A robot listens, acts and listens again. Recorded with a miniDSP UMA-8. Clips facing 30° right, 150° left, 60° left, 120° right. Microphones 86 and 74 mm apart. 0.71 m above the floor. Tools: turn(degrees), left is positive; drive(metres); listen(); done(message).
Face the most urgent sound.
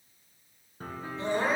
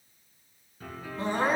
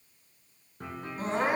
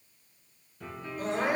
turn(degrees=110)
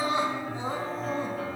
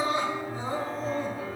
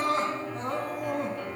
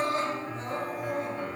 turn(degrees=35)
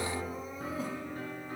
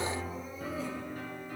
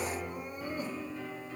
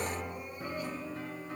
done("Found it: crying, straight ahead, 2 to 4 m away.")